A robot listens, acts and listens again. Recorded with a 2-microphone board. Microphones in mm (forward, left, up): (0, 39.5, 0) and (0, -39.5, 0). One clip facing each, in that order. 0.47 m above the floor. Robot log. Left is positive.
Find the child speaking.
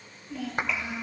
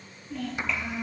cmd yaw +30
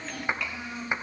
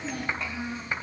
note: So it is at 35° right.
cmd yaw -35
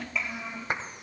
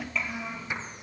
end: Found it: a child speaking, straight ahead.